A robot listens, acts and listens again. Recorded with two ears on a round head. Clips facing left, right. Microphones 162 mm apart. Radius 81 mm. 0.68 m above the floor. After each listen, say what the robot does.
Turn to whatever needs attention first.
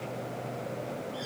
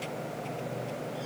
Keep listening.
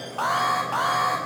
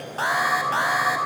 Turn 30° right.
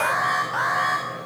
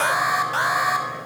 Turn 140° right.
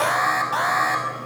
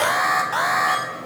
Facing the alarm.